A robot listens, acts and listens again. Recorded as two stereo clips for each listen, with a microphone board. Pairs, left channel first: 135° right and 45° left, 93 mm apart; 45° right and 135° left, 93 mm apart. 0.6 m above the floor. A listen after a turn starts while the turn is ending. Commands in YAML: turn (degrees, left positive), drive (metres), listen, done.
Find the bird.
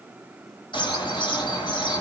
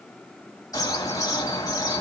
turn: -95
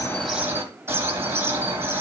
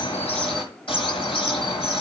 turn: -20
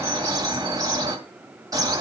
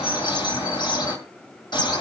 done: "Found it: a bird, straight ahead, 2 to 4 m away."